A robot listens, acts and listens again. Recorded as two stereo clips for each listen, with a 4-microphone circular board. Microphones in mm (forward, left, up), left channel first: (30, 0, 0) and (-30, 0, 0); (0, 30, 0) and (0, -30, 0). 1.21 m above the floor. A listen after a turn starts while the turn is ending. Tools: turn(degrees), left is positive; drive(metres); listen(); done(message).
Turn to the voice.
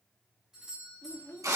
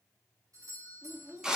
turn(degrees=-50)
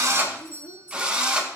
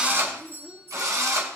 turn(degrees=10)
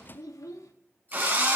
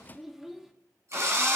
done("Facing the child speaking, 1 to 2 m away.")